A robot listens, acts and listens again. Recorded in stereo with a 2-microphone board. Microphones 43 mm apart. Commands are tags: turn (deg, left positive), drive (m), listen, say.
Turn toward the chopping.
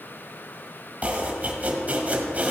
<turn deg="-35"/>
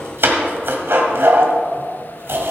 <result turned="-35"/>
<turn deg="-100"/>
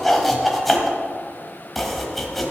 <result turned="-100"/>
<say>Facing the chopping, 1 to 2 m away.</say>